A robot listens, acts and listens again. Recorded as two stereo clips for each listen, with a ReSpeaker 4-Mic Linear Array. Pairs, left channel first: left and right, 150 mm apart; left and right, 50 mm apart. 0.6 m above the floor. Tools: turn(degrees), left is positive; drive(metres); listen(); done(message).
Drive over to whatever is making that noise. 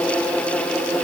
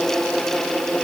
listen()
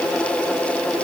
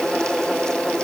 listen()
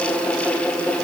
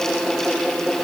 done("I can't make out anything.")